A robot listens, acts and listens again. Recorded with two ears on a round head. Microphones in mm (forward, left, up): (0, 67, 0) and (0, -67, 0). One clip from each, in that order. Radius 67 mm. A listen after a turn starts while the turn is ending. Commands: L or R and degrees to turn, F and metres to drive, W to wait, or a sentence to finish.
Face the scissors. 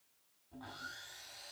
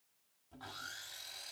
W
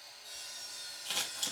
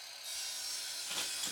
L60
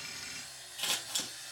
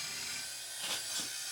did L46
L70
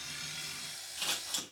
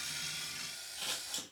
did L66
Found it: scissors, straight ahead, 2 to 4 m away.